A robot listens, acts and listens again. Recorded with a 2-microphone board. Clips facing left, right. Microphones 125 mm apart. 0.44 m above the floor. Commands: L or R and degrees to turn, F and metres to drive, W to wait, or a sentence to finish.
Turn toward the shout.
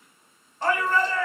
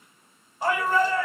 R30
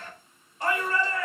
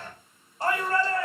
R140
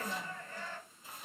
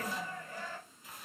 R15
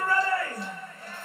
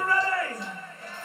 Found it: a shout, straight ahead.